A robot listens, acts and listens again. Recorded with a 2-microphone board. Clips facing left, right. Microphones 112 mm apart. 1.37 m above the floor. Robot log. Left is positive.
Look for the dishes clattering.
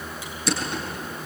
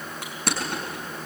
cmd idle
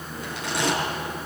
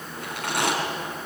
cmd idle
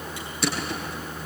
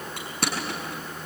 end: I can't make out dishes clattering, only crushing.